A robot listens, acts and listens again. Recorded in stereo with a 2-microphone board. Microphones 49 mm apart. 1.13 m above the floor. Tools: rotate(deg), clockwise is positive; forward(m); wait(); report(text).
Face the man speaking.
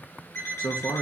rotate(-70)
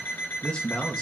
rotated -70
rotate(-20)
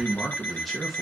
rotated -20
report("Facing the man speaking.")